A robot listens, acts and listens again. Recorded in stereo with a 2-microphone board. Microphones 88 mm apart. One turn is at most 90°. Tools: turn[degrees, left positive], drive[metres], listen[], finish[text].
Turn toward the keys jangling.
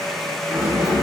Thought: The keys jangling: about 15° right or 165° right.
Action: turn[-15]
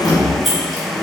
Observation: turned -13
Action: finish[Found it: keys jangling, straight ahead.]